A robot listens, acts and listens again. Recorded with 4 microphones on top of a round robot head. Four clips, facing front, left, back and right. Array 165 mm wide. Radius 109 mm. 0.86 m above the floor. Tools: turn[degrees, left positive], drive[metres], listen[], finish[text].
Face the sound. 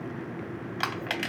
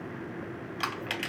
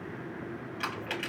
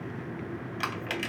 Action: finish[Facing the crushing, 2 to 4 m away.]